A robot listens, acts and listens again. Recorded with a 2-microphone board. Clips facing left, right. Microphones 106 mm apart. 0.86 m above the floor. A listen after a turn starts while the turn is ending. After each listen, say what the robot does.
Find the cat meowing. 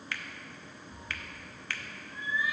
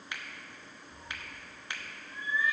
Turn 30° left.
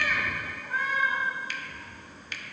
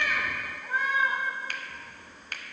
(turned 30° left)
Turn 20° right.
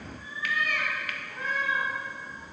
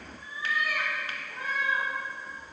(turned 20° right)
Turn 10° right.
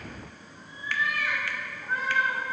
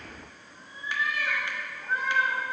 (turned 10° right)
Found it: a cat meowing, straight ahead.